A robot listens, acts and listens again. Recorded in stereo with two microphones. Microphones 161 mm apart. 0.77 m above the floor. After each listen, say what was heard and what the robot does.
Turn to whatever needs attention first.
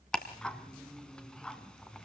Keep listening.
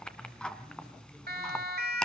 Turn 90° right.
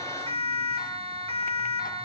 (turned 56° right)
So it is at 40° right. Turn 40° right.
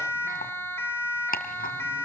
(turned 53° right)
The siren is now 15° left. Turn 15° left.
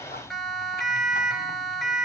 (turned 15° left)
Found it: a siren, straight ahead.